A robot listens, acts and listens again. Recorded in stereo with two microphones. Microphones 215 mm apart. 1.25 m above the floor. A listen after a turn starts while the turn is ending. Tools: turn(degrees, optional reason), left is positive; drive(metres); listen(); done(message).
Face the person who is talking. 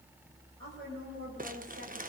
turn(degrees=-90)
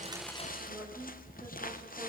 listen()
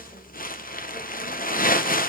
listen()
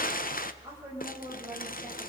turn(degrees=-10, reason="The woman speaking is now 10° right.")
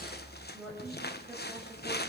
done("Facing the woman speaking.")